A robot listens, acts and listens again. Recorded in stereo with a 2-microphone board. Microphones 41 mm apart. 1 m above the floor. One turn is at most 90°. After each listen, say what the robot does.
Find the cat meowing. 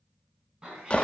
Turn 20° right.
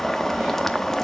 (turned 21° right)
Keep listening.
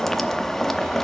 Keep listening.
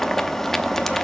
I heard a cat meowing, but can't make it out now. It was about straight ahead or 140° right.